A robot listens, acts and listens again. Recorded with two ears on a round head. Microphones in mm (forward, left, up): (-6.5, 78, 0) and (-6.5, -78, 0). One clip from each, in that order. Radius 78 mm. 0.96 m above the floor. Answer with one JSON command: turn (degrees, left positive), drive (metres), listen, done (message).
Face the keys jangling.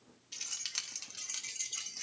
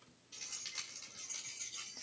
{"turn": 65}
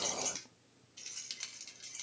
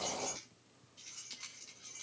{"turn": 50}
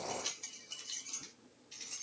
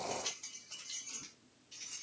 {"turn": 15}
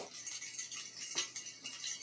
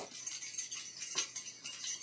{"done": "Facing the keys jangling."}